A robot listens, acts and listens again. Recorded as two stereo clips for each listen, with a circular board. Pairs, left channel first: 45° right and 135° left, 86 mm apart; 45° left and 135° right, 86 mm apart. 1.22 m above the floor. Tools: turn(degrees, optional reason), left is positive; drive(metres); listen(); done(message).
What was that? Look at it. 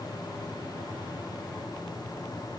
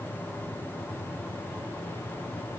listen()
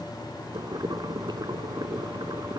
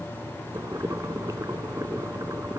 turn(degrees=175, reason="The boiling: 175° left.")
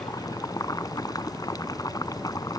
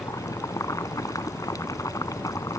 done("Found it: boiling, straight ahead.")